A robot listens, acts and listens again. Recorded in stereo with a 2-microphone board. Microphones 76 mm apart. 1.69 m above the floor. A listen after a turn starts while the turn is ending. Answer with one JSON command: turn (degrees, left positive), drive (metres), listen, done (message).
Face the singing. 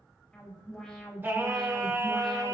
{"turn": -40}
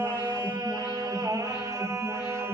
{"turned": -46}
{"turn": -35}
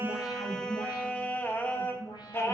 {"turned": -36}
{"turn": 35}
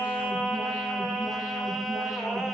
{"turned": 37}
{"done": "Facing the singing, 1 to 2 m away."}